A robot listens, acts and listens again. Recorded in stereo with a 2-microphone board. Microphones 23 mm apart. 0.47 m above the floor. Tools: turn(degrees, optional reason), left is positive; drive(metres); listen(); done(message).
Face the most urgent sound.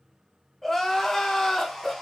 turn(degrees=15, reason="The crying: about 15° left or 165° left.")
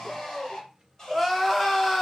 done("Facing the crying, 1 to 2 m away.")